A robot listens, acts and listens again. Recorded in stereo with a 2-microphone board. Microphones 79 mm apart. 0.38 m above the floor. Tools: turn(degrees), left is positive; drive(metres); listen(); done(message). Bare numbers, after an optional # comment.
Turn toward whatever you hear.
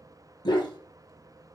# The dog barking: about 60° left or 120° left.
turn(60)
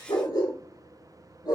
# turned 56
# So it is at 60° left.
turn(60)
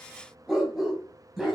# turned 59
done("Found it: a dog barking, straight ahead.")